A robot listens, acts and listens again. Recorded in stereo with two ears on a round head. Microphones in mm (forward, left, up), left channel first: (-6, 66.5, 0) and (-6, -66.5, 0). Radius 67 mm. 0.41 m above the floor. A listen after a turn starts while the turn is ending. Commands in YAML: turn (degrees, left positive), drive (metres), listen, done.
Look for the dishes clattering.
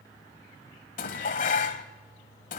turn: 60
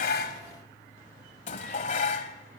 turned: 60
turn: 55
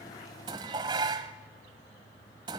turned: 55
turn: -30
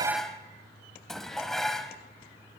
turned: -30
done: "Found it: dishes clattering, straight ahead, 1 to 2 m away."